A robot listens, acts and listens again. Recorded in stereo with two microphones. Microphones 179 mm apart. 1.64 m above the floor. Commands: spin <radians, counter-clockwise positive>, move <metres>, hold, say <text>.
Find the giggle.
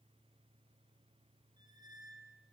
hold
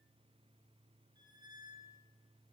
hold
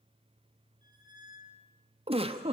spin -0.52
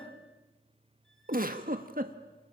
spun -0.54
spin -1.92
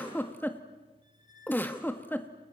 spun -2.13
spin 0.17
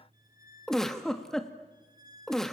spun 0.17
say Facing the giggle.